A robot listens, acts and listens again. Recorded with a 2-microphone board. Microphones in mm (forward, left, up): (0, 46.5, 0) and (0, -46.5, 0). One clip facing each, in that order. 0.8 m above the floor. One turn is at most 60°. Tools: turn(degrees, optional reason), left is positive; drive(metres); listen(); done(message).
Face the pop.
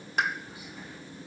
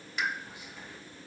turn(degrees=50, reason="The pop: about 50° left or 130° left.")
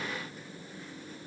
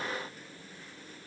listen()
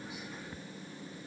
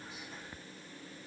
done("I heard a pop, but can't make it out now. It was about straight ahead or 80° left.")